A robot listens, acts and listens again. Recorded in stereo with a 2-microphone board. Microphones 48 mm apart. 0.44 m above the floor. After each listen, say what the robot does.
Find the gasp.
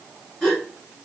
Turn 30° left.
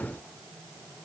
Keep listening.
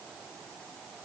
I heard a gasp, but can't make it out now. It was about 20° right or 140° left.